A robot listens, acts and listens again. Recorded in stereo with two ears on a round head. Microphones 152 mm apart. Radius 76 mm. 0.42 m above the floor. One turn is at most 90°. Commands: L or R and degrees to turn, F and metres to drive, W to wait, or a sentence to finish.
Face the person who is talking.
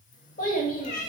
L55
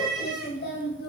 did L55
L70
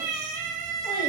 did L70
W
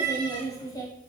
L25
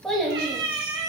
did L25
Facing the child speaking, 1 to 2 m away.